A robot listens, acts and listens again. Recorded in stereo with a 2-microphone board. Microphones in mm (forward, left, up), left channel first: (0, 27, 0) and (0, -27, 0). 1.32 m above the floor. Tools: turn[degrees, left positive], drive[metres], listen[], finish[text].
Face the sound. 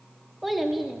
Action: turn[-30]
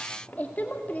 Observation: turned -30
Thought: So it is at 30° left.
Action: turn[30]
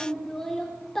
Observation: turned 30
Action: finish[Found it: a child speaking, straight ahead.]